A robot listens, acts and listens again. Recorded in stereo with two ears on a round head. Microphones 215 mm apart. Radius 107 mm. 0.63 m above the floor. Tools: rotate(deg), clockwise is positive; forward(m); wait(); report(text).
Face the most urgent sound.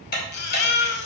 rotate(-45)
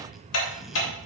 wait()
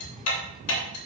wait()
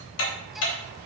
report("I heard a baby crying, but can't make it out now. It was about straight ahead or 90° left.")